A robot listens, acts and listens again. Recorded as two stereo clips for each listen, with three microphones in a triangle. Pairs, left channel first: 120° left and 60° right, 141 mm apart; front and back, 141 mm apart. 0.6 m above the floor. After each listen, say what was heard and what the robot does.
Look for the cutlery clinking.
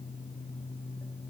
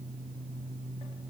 Keep listening.
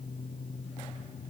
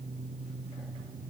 Keep listening.
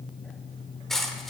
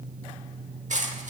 The cutlery clinking: 150° right. Turn 150° right.
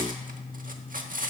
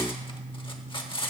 The cutlery clinking is now 50° right. Turn 50° right.
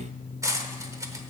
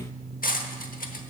Facing the cutlery clinking, under 1 m away.